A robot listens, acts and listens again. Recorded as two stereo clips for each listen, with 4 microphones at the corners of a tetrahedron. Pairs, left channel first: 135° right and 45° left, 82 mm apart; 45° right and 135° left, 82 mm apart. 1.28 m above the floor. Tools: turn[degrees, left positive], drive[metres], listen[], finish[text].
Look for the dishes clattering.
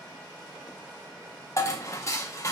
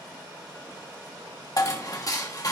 Thought: The dishes clattering: 85° right.
Action: turn[-85]
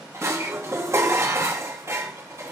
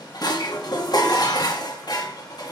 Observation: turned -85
Thought: The dishes clattering is now 10° right.
Action: turn[-10]
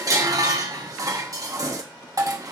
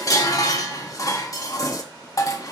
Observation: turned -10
Action: finish[Found it: dishes clattering, straight ahead, 1 to 2 m away.]